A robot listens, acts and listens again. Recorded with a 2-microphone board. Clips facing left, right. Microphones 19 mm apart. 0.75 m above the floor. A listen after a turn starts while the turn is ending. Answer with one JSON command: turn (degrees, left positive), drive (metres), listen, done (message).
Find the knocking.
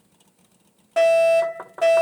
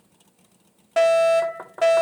{"turn": 30}
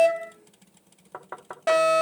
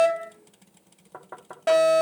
{"turn": 140}
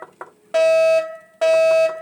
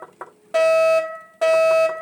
{"listen": true}
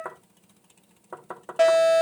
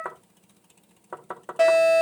{"turn": -20}
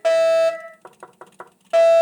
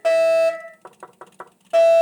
{"done": "Found it: knocking, straight ahead, 1 to 2 m away."}